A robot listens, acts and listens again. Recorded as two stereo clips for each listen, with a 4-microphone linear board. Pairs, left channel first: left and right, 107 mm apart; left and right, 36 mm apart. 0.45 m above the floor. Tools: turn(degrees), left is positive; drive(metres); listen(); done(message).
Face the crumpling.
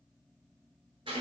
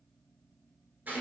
listen()
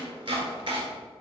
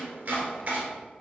listen()
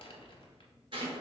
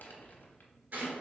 turn(degrees=60)
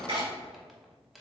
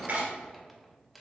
done("Found it: crumpling, straight ahead, under 1 m away.")